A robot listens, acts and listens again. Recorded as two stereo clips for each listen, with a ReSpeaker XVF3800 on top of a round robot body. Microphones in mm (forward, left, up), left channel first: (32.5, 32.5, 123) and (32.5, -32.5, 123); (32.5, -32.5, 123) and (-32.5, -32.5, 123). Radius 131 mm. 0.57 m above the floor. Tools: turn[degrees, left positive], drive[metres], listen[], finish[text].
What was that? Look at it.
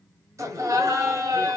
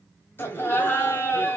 Thought: The laughter: 55° right.
Action: turn[-55]
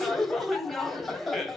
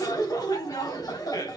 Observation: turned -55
Action: finish[Found it: laughter, straight ahead, 1 to 2 m away.]